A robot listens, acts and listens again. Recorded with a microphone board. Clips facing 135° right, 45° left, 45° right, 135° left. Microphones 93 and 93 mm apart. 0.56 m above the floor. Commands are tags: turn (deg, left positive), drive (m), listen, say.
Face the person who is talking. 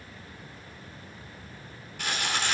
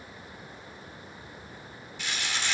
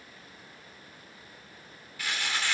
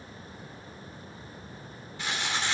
<listen/>
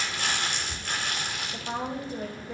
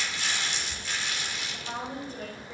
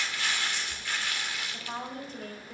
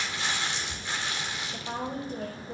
<turn deg="160"/>
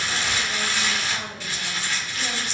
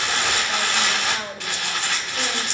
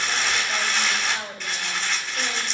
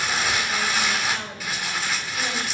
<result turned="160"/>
<turn deg="15"/>
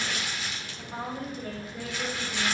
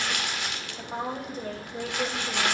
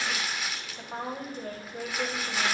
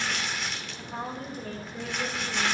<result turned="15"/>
<say>Facing the woman speaking.</say>